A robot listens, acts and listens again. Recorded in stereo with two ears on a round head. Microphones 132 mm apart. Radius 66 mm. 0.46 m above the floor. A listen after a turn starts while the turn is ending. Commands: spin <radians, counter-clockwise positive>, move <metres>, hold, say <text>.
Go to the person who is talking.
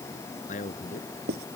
spin 0.96
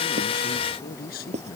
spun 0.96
spin 1.13
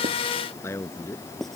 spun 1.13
spin 0.26
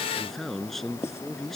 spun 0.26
move 1.0
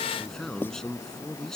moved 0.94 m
move 1.0
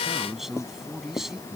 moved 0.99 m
move 1.0
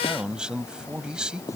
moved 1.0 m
move 1.0
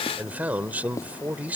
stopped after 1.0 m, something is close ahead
spin -0.26
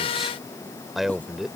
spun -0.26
say I am next to the man speaking.